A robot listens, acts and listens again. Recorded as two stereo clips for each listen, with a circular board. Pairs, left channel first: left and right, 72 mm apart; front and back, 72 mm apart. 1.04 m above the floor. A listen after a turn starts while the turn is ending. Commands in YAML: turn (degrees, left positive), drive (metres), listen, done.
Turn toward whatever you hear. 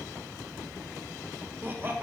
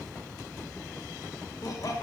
turn: -30
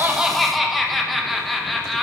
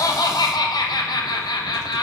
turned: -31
done: "Facing the laughter."